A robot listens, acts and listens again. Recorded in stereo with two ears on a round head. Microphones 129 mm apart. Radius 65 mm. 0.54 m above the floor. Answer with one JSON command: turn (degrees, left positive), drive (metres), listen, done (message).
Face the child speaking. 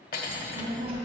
{"turn": -45}
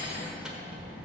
{"turn": -105}
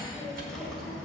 {"done": "Found it: a child speaking, straight ahead."}